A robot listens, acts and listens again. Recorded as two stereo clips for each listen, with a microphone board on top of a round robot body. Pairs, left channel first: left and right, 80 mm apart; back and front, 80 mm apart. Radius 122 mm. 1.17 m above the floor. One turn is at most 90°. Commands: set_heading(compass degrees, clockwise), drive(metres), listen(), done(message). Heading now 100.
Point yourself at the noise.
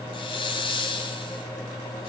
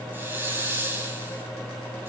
set_heading(30)
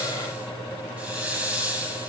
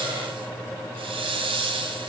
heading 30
set_heading(45)
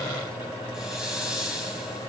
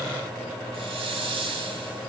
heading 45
done("Found it: a hiss, straight ahead, 2 to 4 m away.")